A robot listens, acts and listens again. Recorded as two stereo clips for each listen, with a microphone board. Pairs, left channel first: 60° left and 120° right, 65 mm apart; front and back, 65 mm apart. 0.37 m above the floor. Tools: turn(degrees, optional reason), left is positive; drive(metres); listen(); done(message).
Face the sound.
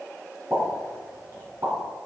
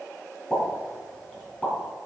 turn(degrees=-70, reason="The pop: 70° right.")
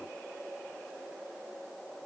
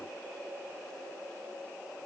done("I heard a pop from this way, but can't make it out now.")